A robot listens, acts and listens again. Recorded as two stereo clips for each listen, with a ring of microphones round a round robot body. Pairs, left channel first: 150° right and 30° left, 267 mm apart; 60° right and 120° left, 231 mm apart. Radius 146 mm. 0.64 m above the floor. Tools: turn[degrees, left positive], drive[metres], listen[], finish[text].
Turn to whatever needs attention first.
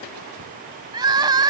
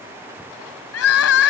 Thought: The crying: 45° right.
Action: turn[-45]
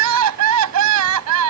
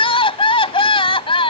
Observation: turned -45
Action: finish[Facing the crying.]